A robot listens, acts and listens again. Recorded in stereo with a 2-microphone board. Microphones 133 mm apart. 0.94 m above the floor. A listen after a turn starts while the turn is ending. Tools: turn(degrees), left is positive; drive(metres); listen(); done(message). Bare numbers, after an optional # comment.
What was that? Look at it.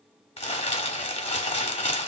# The crumpling: about 50° left or 130° left.
turn(50)
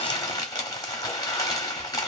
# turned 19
# So it is at 30° left.
turn(30)
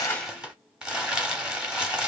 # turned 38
done("Facing the crumpling.")